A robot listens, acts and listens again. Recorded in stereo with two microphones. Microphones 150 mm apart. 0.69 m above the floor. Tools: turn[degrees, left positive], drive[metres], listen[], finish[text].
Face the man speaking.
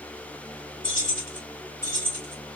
Action: listen[]
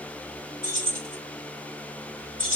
Action: listen[]
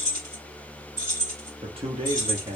Thought: The man speaking: about 40° right or 140° right.
Action: turn[-40]
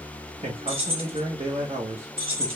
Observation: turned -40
Thought: The man speaking: about 45° right or 135° right.
Action: turn[-45]
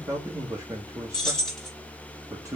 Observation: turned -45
Thought: So it is at 20° right.
Action: turn[-20]
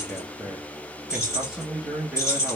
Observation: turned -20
Thought: The man speaking is now 10° right.
Action: turn[-10]
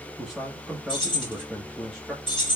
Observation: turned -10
Action: finish[Found it: a man speaking, straight ahead.]